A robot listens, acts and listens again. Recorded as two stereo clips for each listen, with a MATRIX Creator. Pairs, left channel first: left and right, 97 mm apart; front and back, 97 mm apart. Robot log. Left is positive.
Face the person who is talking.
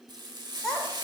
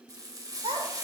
note: The child speaking: 175° left.
cmd yaw +175
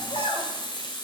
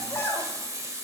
note: The child speaking is now 65° left.
cmd yaw +65
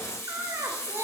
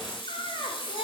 note: The child speaking is now 25° right.
cmd yaw -25
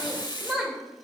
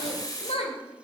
end: Facing the child speaking, 2 to 4 m away.